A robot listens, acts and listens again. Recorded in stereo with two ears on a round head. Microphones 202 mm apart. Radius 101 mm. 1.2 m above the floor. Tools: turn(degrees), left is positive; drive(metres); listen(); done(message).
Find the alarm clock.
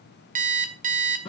turn(degrees=-35)
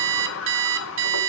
turn(degrees=-105)
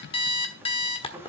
turn(degrees=25)
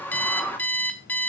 turn(degrees=10)
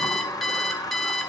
done("Found it: an alarm clock, straight ahead.")